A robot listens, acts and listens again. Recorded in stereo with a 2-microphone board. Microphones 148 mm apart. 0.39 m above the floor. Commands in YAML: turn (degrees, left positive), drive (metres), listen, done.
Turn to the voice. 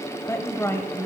turn: 20
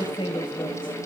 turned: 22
turn: 140
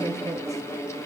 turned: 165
turn: -25
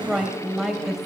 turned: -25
done: "Facing the woman speaking."